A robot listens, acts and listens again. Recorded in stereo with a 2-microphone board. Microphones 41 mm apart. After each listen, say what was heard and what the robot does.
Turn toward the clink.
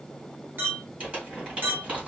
The clink: about 60° right or 120° right. Turn 60° right.
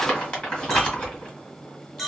Found it: a clink, straight ahead, under 1 m away.